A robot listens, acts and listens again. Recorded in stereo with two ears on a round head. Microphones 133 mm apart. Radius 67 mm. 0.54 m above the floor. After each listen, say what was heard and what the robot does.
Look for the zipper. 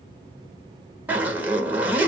Turn 30° right.
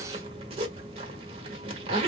So it is at 135° right. Turn 135° right.
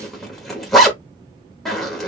Found it: a zipper, straight ahead.